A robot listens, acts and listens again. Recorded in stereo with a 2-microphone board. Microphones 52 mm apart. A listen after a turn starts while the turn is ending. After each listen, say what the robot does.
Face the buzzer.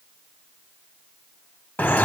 Keep listening.
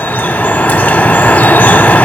Keep listening.
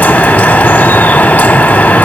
I can't make out a buzzer, only dripping.